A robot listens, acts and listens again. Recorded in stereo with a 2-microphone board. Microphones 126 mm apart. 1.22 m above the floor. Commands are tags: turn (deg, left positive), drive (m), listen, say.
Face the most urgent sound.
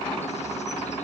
<listen/>
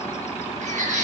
<turn deg="-90"/>
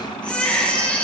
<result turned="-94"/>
<turn deg="10"/>
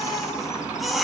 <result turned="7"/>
<say>Found it: a baby crying, straight ahead.</say>